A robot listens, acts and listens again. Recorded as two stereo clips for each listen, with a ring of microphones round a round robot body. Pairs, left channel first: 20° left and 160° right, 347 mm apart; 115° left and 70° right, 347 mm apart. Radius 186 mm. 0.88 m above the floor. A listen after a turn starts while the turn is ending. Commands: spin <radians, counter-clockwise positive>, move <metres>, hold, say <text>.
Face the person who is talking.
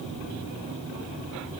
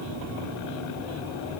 hold
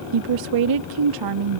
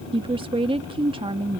spin -2.53
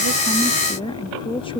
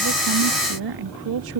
spin -0.96
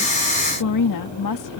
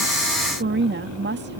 spin -0.17
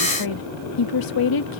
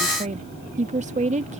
say Found it: a woman speaking, straight ahead.